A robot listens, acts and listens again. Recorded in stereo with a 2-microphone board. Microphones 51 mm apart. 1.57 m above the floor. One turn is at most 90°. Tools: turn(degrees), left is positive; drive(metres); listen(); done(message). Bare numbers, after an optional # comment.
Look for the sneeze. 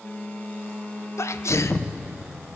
# The sneeze: about 70° left or 110° left.
turn(70)
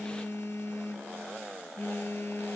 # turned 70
listen()
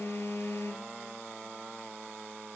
done("I heard a sneeze, but can't make it out now. It was about straight ahead or 40° left.")